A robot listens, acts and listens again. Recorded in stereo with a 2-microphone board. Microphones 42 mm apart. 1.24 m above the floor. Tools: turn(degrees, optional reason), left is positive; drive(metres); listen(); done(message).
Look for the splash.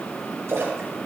turn(degrees=-90)
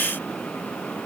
done("Facing where the splash came from. I can't hear it now.")